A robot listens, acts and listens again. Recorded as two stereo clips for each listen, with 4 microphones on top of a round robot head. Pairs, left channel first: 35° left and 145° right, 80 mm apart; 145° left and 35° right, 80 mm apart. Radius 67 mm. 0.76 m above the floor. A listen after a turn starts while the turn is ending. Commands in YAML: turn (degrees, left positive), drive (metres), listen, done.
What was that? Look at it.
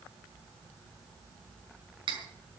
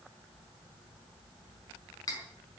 turn: -170
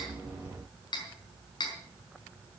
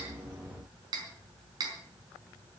done: "Facing the cutlery clinking."